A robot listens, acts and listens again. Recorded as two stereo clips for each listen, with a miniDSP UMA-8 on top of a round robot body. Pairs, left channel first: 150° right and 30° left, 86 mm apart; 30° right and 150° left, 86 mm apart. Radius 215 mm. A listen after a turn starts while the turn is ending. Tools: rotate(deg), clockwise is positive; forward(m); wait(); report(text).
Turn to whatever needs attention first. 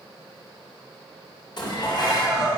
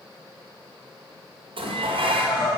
rotate(60)
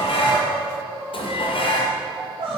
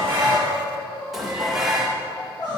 report("Found it: crying, straight ahead.")